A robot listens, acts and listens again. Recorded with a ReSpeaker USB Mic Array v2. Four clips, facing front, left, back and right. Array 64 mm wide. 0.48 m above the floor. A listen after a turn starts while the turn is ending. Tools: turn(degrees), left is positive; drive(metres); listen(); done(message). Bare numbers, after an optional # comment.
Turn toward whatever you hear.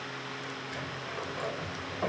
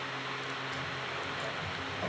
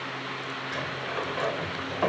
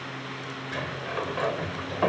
# The sliding door: 120° right.
turn(-120)
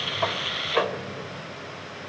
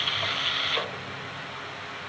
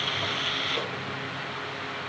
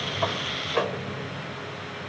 # The sliding door is now 20° right.
turn(-20)
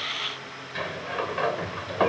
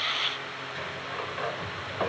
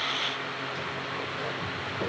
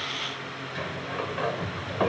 # The sliding door is now 10° right.
turn(-10)
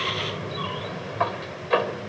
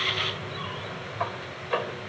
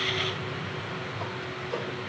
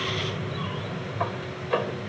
done("Facing the sliding door.")